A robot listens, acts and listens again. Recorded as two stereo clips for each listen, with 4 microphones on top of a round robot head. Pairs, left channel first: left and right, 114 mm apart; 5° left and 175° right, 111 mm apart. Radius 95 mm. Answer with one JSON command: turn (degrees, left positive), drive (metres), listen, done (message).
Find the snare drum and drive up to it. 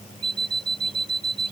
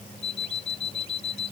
{"listen": true}
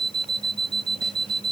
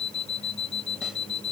{"listen": true}
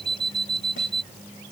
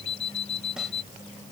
{"done": "I can't make out a snare drum, only an alarm clock."}